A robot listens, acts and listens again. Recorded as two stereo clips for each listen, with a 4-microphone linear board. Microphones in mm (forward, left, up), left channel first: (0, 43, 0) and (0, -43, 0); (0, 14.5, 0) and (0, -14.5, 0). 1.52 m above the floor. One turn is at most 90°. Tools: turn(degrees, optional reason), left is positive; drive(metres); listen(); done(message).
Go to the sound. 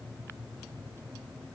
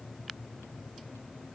listen()
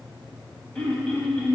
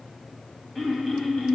turn(degrees=30)
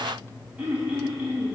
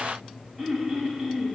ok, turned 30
turn(degrees=-15, reason="So it is at 15° right.")
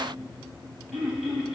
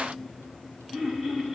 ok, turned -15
drive(metres=1.0)
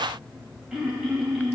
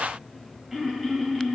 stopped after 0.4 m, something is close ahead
done("Blocked. The throat clearing is further on, straight ahead.")